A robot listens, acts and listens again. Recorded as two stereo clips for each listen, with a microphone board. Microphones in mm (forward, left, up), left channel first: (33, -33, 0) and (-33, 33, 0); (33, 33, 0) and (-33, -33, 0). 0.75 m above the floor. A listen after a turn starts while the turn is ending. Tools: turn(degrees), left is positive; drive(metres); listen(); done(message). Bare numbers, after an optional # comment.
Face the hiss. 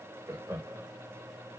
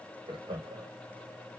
listen()
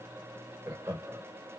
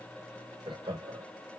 listen()
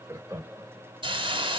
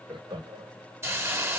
# The hiss: 165° left.
turn(165)
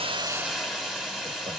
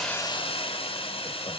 # The hiss is now 50° left.
turn(50)
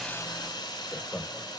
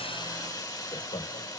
done("Facing the hiss.")